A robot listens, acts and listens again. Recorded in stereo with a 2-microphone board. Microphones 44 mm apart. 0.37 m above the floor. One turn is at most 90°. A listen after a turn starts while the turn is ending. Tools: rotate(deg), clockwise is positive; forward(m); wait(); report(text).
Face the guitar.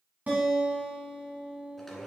rotate(35)
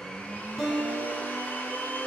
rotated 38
report("Facing the guitar.")